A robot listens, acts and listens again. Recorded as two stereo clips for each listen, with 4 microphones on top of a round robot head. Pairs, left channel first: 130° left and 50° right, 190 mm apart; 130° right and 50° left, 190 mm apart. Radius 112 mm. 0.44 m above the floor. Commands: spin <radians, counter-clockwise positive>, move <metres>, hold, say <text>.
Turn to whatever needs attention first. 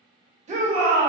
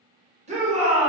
say Found it: a shout, straight ahead.